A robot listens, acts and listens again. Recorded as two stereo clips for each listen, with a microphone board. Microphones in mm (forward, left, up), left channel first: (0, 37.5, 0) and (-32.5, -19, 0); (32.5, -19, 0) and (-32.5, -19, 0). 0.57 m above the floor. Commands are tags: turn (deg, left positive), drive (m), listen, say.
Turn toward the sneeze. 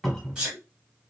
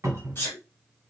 <turn deg="-40"/>
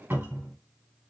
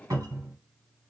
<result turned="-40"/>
<say>Facing where the sneeze came from. I can't hear it now.</say>